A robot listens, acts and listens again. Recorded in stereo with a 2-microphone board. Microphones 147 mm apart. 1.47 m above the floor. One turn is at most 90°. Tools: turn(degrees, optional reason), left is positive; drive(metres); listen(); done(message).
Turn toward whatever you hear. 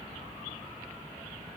listen()
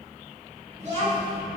turn(degrees=-45, reason="The child speaking: about 45° right or 135° right.")
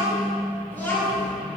turn(degrees=15, reason="So it is at 15° left.")
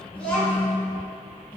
turn(degrees=15, reason="The child speaking is now 15° left.")
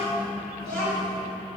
done("Found it: a child speaking, straight ahead, 2 to 4 m away.")